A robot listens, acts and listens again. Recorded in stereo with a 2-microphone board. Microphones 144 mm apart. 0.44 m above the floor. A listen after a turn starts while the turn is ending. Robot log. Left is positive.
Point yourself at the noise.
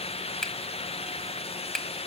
cmd yaw +30
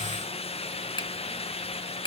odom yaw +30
note: So it is at 145° left.
cmd yaw +145
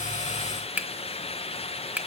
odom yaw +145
note: The finger snap is now 10° right.
cmd yaw -10
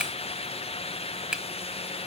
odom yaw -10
end: Found it: a finger snap, straight ahead, 1 to 2 m away.